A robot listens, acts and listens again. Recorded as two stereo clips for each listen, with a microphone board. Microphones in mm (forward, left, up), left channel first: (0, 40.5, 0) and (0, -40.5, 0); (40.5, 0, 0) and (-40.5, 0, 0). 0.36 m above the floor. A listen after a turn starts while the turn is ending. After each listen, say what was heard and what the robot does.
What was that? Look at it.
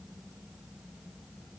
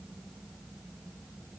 Keep listening.
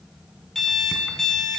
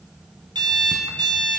The alarm clock: 175° left. Turn 175° left.
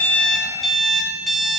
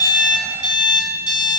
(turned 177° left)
Found it: an alarm clock, straight ahead.